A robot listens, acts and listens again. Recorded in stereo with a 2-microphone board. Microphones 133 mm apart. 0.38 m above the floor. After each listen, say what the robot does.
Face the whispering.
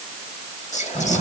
Turn 60° left.
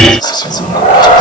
Turn 35° left.
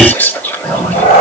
Turn 15° left.
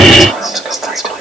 Found it: whispering, straight ahead.